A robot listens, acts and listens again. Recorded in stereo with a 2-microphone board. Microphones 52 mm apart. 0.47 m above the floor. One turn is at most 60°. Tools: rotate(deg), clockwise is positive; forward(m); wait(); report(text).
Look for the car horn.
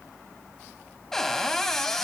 wait()
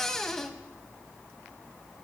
wait()
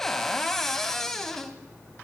report("I can't make out a car horn to turn to.")